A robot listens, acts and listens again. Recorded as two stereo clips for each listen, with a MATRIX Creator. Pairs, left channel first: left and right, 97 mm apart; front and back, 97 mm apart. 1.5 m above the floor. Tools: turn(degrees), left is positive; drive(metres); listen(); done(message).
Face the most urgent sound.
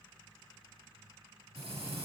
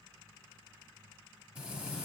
listen()
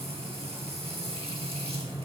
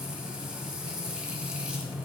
listen()
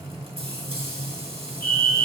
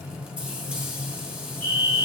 turn(degrees=155)
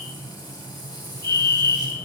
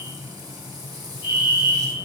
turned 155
turn(degrees=30)
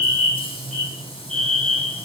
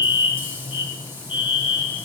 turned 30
turn(degrees=10)
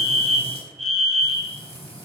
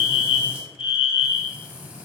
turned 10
done("Found it: a fire alarm, straight ahead.")